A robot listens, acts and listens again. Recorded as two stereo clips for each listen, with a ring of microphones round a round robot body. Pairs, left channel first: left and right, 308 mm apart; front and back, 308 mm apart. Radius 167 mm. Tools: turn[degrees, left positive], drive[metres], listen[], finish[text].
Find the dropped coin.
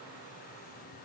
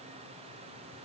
Action: listen[]
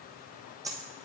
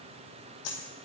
Thought: The dropped coin: 10° right.
Action: turn[-10]
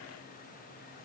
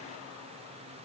Action: finish[Facing where the dropped coin came from. I can't hear it now.]